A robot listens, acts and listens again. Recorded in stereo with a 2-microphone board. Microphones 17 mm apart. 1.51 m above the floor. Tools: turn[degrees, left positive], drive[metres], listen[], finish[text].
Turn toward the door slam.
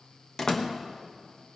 Thought: The door slam: about 40° left or 140° left.
Action: turn[40]
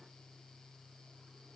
Action: listen[]
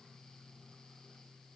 Action: finish[I heard a door slam, but can't make it out now. It was about straight ahead or 100° left.]